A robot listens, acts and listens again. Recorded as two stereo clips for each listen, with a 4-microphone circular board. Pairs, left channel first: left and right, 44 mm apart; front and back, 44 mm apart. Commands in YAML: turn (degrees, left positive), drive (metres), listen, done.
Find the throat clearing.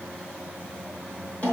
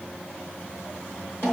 listen: true
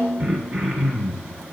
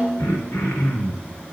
done: "Facing the throat clearing, 2 to 4 m away."